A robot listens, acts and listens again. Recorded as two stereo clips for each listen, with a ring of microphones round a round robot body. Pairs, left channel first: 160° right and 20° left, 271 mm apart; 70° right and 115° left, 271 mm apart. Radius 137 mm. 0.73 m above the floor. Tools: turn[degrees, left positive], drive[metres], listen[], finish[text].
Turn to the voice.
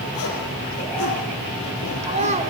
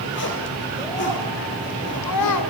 Thought: The child speaking: 45° right.
Action: turn[-45]
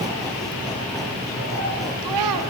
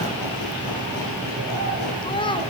Action: finish[Facing the child speaking.]